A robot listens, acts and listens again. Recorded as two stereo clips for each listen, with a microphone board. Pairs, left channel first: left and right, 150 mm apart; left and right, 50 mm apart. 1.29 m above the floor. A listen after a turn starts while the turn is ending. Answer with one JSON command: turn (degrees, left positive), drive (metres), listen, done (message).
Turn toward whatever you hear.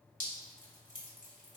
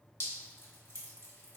{"turn": 60}
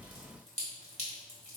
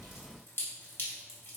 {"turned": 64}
{"turn": 50}
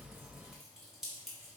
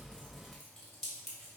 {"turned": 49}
{"done": "Facing the dripping, 1 to 2 m away."}